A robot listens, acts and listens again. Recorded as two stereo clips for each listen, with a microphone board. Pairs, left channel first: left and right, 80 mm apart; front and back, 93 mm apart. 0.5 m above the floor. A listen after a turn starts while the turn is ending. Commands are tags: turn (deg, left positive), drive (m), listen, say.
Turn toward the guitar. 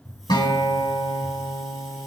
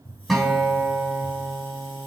<turn deg="90"/>
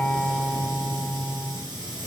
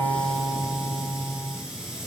<say>Facing the guitar, over 4 m away.</say>